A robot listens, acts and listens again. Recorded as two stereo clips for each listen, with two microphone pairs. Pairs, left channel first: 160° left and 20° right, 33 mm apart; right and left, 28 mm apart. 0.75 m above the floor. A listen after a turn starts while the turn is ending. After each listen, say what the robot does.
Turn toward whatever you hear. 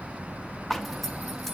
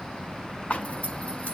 Turn 120° right.
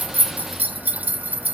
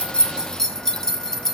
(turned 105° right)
Turn 15° right.
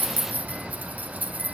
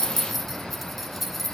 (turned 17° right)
Facing the zipper.